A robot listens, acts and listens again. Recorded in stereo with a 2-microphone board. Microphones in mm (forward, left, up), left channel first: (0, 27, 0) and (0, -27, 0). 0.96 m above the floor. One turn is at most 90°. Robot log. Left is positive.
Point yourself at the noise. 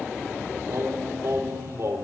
note: The singing: about 60° right or 120° right.
cmd yaw -60
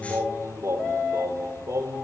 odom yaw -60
note: So it is at 75° right.
cmd yaw -75
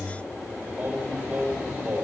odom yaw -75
note: The singing is now 35° right.
cmd yaw -35
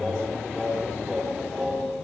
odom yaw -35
end: Facing the singing.